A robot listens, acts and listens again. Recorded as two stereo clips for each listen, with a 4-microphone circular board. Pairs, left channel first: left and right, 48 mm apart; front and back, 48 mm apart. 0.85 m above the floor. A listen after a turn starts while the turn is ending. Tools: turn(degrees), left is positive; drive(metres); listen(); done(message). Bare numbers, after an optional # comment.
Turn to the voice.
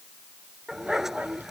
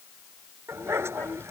# The child speaking: 40° right.
turn(-40)
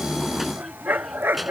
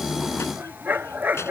done("Found it: a child speaking, straight ahead.")